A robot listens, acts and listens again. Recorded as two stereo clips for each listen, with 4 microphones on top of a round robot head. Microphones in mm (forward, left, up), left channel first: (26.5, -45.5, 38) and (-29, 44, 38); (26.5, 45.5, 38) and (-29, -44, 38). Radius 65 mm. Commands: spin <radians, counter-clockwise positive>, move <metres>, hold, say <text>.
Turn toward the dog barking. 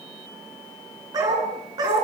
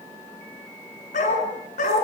spin 1.13
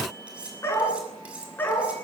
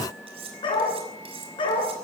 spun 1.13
spin 0.26
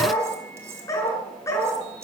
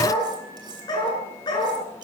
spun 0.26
spin 0.17
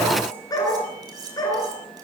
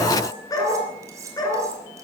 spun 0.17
say Facing the dog barking.